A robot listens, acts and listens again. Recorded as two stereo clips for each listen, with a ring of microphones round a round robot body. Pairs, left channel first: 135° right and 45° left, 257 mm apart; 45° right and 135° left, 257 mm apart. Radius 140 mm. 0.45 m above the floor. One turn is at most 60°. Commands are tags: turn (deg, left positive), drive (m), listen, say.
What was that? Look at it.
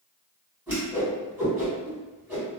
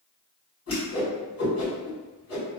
<turn deg="-35"/>
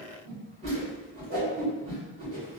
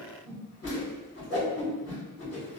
<turn deg="-15"/>
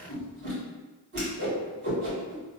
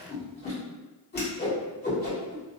<say>Facing the whoosh.</say>